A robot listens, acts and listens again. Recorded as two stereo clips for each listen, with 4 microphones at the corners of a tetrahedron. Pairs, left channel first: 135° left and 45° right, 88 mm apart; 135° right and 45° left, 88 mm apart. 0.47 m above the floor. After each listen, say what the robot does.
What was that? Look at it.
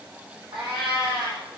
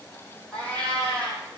Turn 60° right.
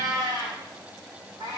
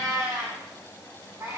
Facing the cat meowing, over 4 m away.